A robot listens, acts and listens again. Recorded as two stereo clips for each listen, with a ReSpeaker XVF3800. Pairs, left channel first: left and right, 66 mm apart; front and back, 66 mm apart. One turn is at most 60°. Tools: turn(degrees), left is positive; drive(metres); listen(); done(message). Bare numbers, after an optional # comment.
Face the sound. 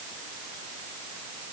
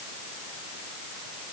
listen()
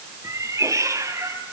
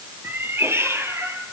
# The cat meowing: 130° right.
turn(-60)
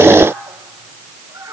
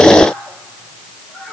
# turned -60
# The cat meowing is now 100° right.
turn(-60)
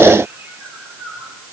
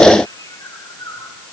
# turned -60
# The cat meowing is now 40° right.
turn(-40)
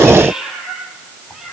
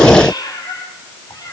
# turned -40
# The cat meowing is now 10° right.
turn(-10)
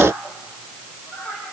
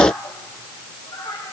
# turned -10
done("Facing the cat meowing, over 4 m away.")